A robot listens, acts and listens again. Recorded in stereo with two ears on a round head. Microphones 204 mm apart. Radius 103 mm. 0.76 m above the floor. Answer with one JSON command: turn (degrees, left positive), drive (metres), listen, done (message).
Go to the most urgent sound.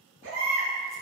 {"turn": -60}
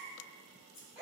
{"drive": 1.0}
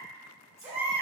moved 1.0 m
{"turn": -10}
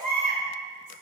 {"drive": 1.0}
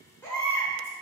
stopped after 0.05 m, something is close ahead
{"turn": 10}
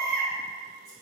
{"done": "Arrived at the baby crying, straight ahead."}